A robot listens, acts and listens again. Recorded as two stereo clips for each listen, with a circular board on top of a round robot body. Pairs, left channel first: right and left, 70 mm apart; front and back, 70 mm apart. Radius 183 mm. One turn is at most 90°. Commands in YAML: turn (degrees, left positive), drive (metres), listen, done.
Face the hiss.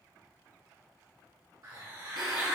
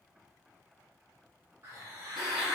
turn: 90
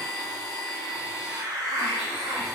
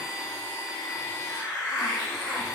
turn: 45
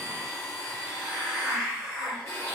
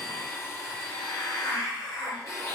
done: "Facing the hiss, 1 to 2 m away."